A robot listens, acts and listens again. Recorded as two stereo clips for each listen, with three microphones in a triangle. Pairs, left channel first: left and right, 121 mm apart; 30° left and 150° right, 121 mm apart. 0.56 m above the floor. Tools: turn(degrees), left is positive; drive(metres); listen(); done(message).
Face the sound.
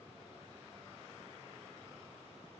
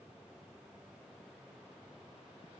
listen()
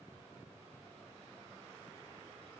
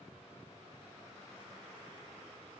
listen()
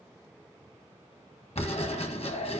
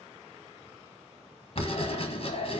turn(degrees=65)
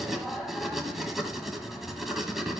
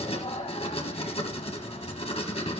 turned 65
done("Facing the writing.")